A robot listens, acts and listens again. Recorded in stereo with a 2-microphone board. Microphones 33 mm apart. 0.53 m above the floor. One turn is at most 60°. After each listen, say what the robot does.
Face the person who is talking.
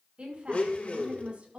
Turn 40° right.
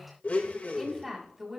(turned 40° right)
Turn 10° right.
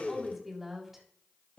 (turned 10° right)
Turn 10° right.
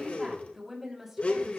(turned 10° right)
Turn 10° right.
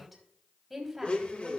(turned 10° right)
Found it: a woman speaking, straight ahead.